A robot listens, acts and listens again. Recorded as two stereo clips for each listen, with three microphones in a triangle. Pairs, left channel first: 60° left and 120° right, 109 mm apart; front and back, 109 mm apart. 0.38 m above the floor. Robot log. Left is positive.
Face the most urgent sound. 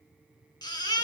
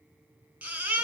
note: The baby crying: 105° left.
cmd yaw +105
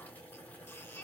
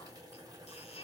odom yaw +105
cmd idle
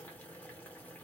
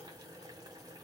cmd idle
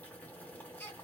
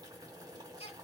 note: The baby crying is now 10° right.
cmd yaw -10
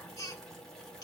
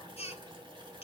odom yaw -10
end: Found it: a baby crying, straight ahead, 1 to 2 m away.